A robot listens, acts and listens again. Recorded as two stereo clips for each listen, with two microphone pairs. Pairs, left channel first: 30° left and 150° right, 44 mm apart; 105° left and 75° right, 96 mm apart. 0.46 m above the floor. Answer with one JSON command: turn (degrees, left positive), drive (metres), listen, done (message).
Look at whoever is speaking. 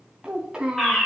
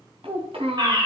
{"turn": -75}
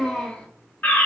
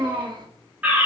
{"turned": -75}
{"turn": -40}
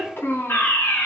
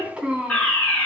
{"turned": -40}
{"done": "Facing the child speaking."}